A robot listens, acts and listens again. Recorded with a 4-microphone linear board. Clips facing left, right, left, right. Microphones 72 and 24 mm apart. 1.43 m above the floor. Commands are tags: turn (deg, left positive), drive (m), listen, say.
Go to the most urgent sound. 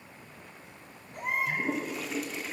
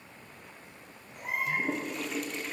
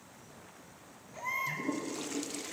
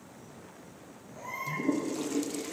<turn deg="60"/>
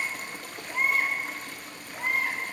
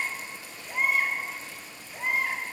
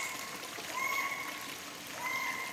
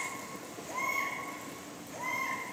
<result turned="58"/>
<drive m="1.0"/>
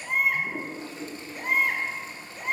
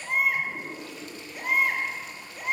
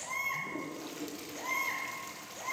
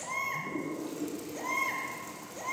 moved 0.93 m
<drive m="1.0"/>
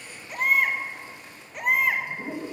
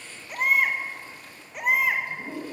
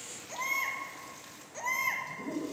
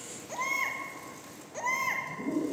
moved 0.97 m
<drive m="1.0"/>
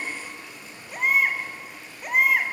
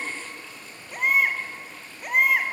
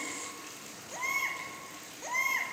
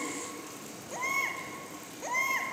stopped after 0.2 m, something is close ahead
<say>I am next to the baby crying.</say>